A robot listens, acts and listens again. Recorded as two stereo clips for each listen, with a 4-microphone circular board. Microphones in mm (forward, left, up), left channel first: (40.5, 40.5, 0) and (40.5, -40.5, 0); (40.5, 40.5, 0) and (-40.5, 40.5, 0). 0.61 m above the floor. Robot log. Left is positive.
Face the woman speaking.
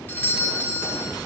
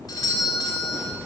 cmd idle
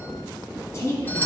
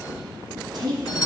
note: The woman speaking: 145° left.
cmd yaw +145
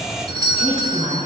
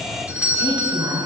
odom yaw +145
note: The woman speaking is now 15° left.
cmd yaw +15
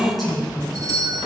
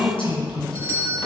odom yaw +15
end: Facing the woman speaking.